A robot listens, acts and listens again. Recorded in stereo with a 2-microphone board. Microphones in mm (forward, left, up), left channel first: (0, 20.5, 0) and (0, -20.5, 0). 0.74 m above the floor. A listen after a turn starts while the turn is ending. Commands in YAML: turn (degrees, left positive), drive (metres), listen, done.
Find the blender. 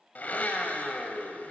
turn: 45
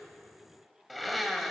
done: "Facing the blender, 1 to 2 m away."